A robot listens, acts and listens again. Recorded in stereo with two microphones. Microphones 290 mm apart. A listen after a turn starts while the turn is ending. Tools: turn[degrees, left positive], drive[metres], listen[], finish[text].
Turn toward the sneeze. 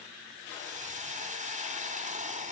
Action: listen[]
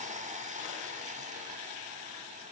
Action: listen[]
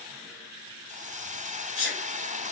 Thought: The sneeze: about 45° left or 135° left.
Action: turn[45]
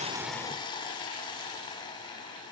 Action: listen[]
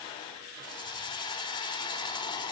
Action: finish[I heard a sneeze, but can't make it out now. It was about straight ahead or 90° left.]